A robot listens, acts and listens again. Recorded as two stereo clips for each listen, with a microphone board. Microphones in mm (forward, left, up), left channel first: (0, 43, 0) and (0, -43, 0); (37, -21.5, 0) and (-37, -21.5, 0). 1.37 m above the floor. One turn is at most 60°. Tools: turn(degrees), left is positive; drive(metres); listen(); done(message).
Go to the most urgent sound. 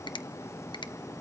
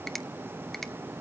listen()
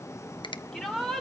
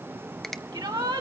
turn(degrees=60)
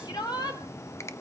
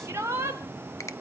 turn(degrees=60)
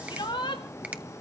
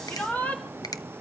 turn(degrees=60)
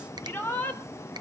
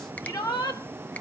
turn(degrees=20)
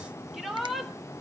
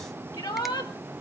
drive(metres=1.0)
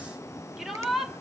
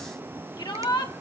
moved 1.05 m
drive(metres=1.0)
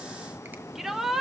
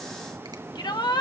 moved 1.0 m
drive(metres=1.0)
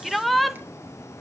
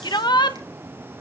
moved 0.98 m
drive(metres=1.0)
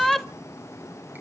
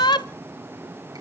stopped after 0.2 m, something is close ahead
done("Arrived at the shout, straight ahead.")